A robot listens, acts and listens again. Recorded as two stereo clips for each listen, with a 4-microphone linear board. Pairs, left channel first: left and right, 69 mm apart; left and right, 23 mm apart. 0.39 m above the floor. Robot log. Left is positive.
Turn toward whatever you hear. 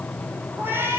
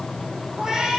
note: The cat meowing: about 30° right or 150° right.
cmd yaw -30
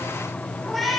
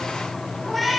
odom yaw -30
end: Found it: a cat meowing, straight ahead.